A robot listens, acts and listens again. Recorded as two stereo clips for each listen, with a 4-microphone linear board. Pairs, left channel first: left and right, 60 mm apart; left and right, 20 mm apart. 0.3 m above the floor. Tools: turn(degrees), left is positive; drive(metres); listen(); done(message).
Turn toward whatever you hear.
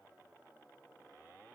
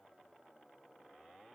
listen()
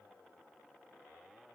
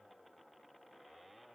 listen()
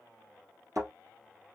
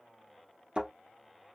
turn(degrees=-60)
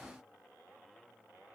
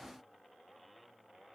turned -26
listen()
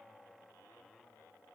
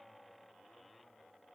done("I heard a thud, but can't make it out now. It was about 35° right or 90° right.")